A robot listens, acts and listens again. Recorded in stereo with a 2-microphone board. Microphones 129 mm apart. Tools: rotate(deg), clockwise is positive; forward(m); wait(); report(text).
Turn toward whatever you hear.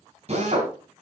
rotate(50)
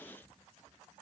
wait()
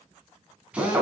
rotate(10)
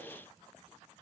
wait()
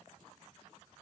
wait()
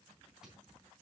report("I heard a drill from this way, but can't make it out now.")